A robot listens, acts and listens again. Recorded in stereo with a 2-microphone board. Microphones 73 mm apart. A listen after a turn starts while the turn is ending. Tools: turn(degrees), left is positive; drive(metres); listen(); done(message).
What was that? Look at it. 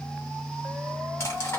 turn(degrees=40)
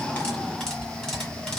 done("Facing the cutlery clinking, 1 to 2 m away.")